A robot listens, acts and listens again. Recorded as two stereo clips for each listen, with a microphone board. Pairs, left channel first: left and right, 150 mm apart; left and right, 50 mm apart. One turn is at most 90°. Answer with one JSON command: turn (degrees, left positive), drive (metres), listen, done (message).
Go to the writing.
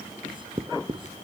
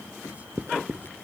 {"turn": -35}
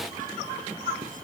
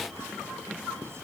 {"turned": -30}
{"listen": true}
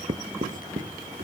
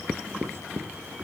{"turn": -90}
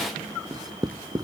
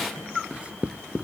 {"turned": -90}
{"turn": -25}
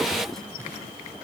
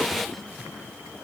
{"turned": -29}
{"listen": true}
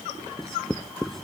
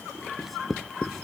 {"drive": 1.0}
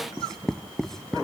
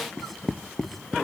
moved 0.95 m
{"drive": 1.0}
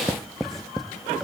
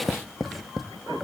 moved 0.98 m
{"drive": 1.0}
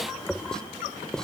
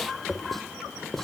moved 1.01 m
{"drive": 1.0}
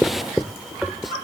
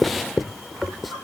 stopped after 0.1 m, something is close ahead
{"done": "Arrived at the writing, straight ahead."}